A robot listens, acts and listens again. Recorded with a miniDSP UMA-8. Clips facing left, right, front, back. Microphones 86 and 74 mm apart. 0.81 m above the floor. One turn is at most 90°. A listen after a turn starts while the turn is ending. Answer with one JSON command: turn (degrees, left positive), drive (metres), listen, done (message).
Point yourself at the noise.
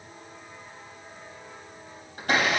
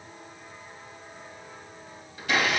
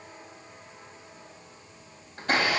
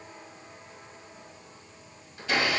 {"turn": 45}
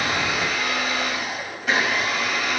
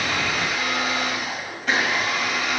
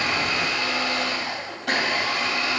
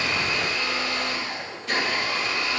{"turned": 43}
{"done": "Found it: a blender, straight ahead."}